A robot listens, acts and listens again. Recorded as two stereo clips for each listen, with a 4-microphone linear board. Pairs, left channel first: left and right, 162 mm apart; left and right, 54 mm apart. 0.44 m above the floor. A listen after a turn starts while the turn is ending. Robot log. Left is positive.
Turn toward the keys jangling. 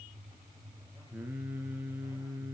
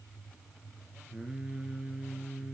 cmd idle
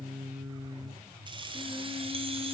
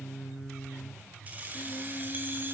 note: The keys jangling: about 30° right or 150° right.
cmd yaw -30
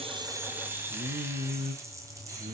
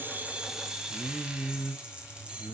note: The keys jangling: about 20° right or 160° right.
cmd yaw -20
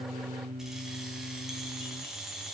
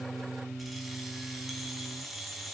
end: Found it: keys jangling, straight ahead.